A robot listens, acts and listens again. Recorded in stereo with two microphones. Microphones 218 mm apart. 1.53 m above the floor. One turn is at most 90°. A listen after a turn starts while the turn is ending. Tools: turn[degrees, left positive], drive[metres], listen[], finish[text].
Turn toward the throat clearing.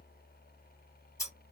Action: listen[]
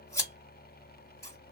Action: listen[]
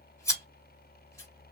Action: finish[I can't make out throat clearing to turn to.]